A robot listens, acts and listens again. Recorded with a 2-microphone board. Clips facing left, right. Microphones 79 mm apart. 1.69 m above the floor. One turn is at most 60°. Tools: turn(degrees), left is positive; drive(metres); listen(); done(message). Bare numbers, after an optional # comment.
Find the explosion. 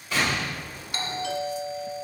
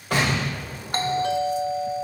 # The explosion: about 55° right or 125° right.
turn(-55)
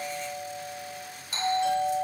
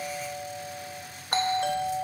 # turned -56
listen()
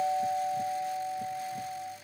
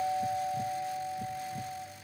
done("I heard an explosion, but can't make it out now. It was about straight ahead or 70° right.")